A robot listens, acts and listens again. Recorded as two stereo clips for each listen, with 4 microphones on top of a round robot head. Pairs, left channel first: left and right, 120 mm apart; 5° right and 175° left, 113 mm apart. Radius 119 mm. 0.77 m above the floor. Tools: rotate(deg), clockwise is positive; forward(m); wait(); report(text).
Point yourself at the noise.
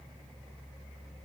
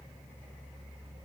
wait()
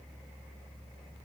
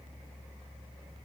wait()
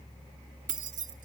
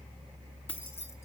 rotate(75)
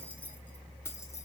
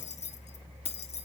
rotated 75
rotate(-20)
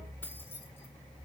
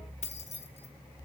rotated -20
rotate(-15)
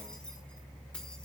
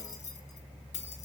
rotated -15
wait()
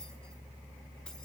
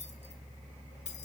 wait()
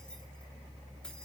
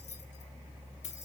report("Facing where the keys jangling came from. I can't hear it now.")